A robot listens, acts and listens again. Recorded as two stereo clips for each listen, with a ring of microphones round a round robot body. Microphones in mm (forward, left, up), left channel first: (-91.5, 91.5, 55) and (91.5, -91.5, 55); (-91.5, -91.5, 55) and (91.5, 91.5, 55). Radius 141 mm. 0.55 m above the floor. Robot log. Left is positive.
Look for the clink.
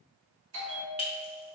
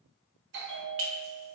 note: The clink: 70° left.
cmd yaw +70
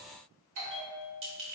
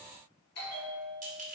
note: The clink is now 10° right.
cmd yaw -10
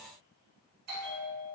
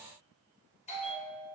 cmd idle
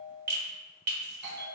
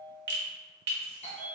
end: Found it: a clink, straight ahead, 1 to 2 m away.